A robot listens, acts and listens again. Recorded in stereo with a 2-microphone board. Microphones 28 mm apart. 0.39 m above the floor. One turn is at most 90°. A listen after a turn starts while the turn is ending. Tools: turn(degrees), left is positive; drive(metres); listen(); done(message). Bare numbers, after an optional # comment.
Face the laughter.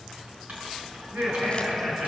turn(-90)
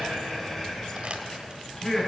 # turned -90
done("Facing the laughter, over 4 m away.")